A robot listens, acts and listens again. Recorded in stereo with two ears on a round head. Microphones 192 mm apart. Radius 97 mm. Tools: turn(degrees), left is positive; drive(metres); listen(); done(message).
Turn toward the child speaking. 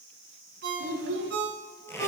turn(degrees=-65)
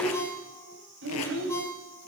turn(degrees=-65)
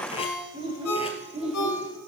turn(degrees=-30)
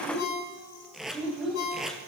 done("Found it: a child speaking, straight ahead.")